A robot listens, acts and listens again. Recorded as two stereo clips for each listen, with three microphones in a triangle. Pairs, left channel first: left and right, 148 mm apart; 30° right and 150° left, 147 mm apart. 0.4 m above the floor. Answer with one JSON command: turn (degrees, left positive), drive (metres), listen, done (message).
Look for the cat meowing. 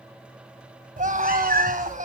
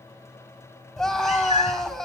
{"turn": -75}
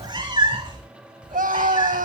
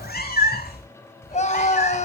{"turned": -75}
{"turn": -30}
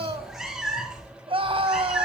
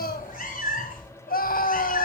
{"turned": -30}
{"done": "Found it: a cat meowing, straight ahead, over 4 m away."}